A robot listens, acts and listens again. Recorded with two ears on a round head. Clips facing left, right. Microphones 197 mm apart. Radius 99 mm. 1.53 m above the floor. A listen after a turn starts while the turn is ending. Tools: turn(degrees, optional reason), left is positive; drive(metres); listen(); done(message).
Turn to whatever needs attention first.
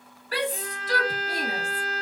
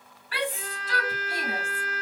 turn(degrees=35, reason="The shout: about 35° left or 145° left.")
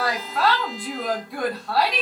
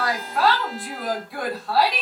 done("Facing the shout.")